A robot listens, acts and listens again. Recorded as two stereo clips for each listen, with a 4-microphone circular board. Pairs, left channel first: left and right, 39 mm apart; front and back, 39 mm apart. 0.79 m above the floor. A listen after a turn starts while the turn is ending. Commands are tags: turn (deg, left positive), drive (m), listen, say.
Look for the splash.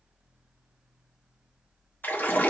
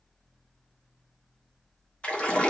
<turn deg="55"/>
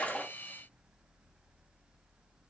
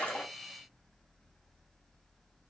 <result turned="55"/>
<say>Facing where the splash came from. I can't hear it now.</say>